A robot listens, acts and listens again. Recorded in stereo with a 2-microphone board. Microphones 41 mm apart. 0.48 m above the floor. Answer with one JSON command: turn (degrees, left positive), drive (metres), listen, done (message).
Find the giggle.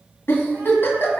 {"turn": 90}
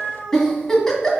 {"turn": 10}
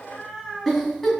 {"done": "Found it: a giggle, straight ahead."}